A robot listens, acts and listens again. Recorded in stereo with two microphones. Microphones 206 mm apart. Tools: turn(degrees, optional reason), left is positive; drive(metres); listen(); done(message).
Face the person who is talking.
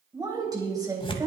turn(degrees=-20, reason="The woman speaking: about 20° right or 160° right.")
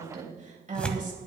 turn(degrees=-140, reason="So it is at 140° right.")
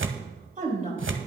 turn(degrees=-40, reason="The woman speaking is now 40° right.")
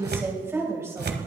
turn(degrees=-15, reason="The woman speaking is now 15° right.")
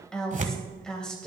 done("Facing the woman speaking.")